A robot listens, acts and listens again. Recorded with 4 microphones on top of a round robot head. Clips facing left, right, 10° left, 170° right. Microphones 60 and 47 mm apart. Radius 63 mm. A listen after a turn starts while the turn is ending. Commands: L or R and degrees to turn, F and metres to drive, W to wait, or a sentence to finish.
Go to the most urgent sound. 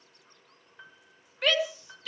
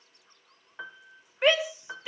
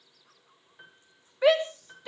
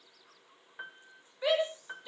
R20
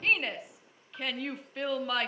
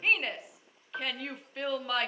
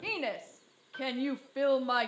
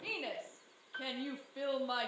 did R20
F1.0
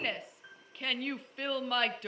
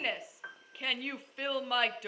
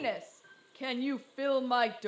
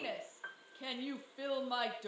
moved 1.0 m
F1.0
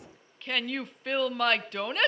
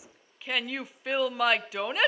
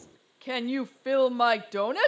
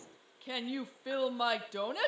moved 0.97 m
F1.0
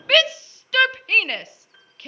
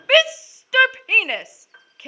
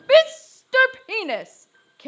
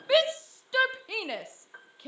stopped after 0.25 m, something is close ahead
R10
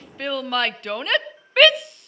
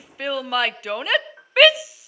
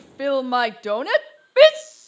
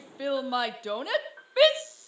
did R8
Arrived at the shout, straight ahead.